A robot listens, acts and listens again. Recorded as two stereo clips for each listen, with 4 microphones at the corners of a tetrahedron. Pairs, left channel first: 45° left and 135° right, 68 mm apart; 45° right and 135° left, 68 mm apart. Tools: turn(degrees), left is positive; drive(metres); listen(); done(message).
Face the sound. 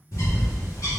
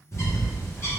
done("Found it: a bird, straight ahead, 1 to 2 m away.")